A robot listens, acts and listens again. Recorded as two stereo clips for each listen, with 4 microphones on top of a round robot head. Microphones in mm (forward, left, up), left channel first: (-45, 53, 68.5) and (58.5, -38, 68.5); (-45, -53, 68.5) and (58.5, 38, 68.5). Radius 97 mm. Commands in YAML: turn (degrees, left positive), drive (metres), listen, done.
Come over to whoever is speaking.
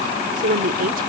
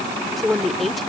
turn: -50
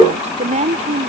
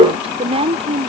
drive: 1.0
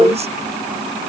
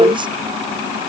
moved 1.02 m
listen: true
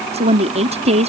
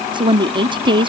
turn: -10
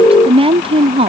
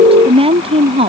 drive: 1.0
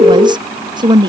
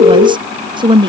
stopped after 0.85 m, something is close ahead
done: "Arrived at the woman speaking, straight ahead."